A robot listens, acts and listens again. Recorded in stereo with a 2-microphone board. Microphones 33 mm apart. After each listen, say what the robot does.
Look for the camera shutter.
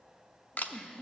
Turn 60° left.
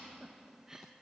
Keep listening.
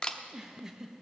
Turn 30° left.
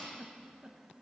Keep listening.
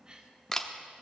Turn 15° left.
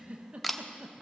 Found it: a camera shutter, straight ahead, under 1 m away.